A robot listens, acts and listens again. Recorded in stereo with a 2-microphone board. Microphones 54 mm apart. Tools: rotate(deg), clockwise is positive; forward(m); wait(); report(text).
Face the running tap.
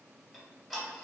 wait()
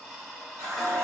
rotate(90)
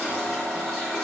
rotate(-15)
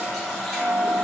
report("Facing the running tap.")